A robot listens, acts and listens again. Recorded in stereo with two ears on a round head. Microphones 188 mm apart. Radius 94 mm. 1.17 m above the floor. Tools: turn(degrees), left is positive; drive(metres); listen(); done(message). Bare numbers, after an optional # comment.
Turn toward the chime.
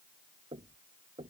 listen()
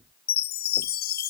# The chime: about 45° left or 135° left.
turn(45)
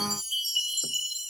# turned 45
done("Found it: a chime, straight ahead.")